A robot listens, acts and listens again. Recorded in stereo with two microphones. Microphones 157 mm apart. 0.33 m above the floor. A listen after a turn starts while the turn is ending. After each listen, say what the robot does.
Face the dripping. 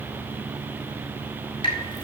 Turn 35° left.
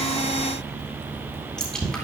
Found it: dripping, straight ahead, 2 to 4 m away.